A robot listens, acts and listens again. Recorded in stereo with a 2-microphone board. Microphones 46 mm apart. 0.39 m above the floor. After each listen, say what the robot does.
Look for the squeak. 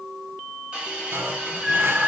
Turn 15° right.
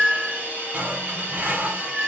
Facing the squeak.